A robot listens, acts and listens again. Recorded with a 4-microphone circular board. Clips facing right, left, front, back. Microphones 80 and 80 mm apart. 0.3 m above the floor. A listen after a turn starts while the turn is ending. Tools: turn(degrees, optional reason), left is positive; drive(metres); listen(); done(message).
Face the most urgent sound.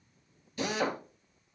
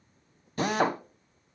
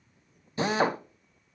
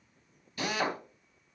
listen()
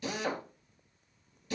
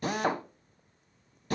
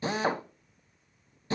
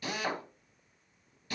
listen()
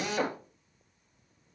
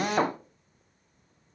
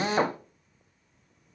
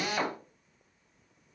done("I can't make out anything urgent to turn to.")